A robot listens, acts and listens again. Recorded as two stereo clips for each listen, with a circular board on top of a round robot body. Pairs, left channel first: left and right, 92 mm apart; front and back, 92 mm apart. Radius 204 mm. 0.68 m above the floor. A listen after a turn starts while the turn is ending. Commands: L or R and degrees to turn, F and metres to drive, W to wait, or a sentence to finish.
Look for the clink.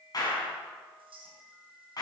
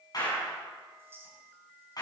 R115
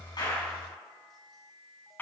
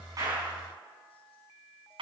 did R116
W
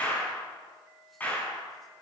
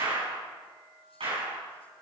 W
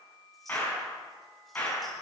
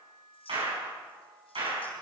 I heard a clink from this way, but can't make it out now.